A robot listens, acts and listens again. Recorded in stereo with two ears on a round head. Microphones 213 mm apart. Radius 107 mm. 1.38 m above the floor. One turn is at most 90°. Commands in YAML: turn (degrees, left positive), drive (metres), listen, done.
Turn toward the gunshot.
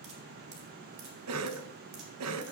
listen: true
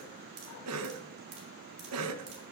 listen: true
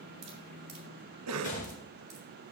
turn: 35
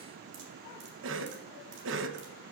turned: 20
listen: true
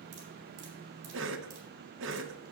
done: "I heard a gunshot, but can't make it out now. It was about 15° left or 125° left."